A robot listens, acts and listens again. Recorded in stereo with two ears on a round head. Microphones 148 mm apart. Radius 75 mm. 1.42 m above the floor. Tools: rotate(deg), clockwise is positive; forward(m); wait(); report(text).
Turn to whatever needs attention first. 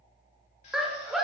rotate(-30)
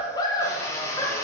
rotate(-155)
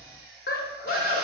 rotate(-55)
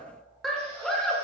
report("Facing the scream, 1 to 2 m away.")